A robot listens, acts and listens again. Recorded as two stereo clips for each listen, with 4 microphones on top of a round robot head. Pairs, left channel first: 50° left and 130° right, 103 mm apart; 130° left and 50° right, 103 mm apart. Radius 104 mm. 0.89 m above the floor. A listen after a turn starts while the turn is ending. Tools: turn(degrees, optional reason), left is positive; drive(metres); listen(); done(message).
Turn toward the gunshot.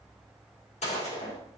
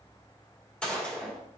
turn(degrees=50, reason="The gunshot: 50° left.")
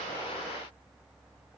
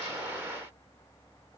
done("I heard a gunshot from this way, but can't make it out now.")